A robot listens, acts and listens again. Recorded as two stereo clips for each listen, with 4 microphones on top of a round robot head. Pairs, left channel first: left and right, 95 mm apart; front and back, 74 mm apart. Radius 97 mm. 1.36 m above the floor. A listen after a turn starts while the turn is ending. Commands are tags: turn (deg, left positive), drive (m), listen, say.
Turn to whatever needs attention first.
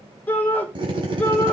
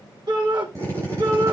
<turn deg="160"/>
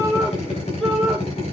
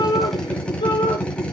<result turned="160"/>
<say>Found it: a shout, straight ahead, over 4 m away.</say>